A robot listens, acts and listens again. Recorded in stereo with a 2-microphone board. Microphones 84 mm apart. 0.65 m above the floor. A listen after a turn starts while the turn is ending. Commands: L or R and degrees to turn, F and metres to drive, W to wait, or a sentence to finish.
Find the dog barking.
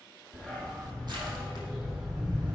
R30
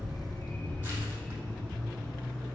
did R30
L30
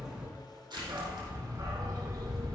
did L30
R45
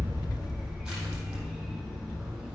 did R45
Found it: a dog barking, straight ahead, 2 to 4 m away.